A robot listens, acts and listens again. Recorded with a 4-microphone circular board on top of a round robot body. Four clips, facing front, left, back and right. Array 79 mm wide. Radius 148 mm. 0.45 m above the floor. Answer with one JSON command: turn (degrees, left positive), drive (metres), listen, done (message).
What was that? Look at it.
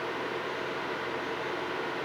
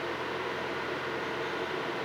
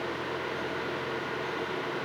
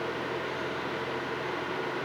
{"listen": true}
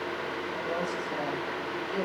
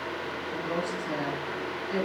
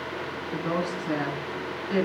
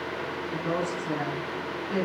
{"turn": -160}
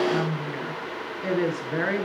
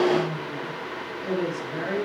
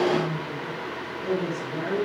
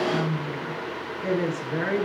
{"turn": -15}
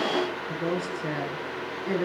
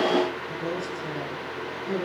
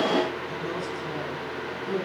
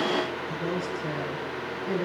{"done": "Found it: a woman speaking, straight ahead."}